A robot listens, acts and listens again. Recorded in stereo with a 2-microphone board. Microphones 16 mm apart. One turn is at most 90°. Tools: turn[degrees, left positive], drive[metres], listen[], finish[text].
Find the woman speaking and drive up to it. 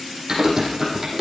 Action: listen[]
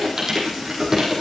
Action: listen[]
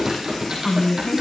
Thought: The woman speaking: about 65° left or 115° left.
Action: turn[65]
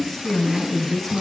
Action: drive[1.0]
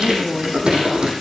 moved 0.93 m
Action: drive[1.0]
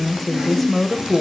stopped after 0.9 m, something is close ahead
Action: finish[I am next to the woman speaking.]